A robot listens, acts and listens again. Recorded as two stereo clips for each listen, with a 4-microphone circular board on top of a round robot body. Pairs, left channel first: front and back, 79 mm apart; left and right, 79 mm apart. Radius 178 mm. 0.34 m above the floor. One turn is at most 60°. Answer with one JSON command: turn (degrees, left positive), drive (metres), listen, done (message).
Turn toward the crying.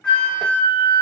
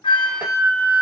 {"listen": true}
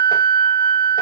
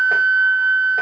{"listen": true}
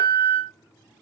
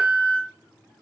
{"done": "I can't make out crying, only a flute."}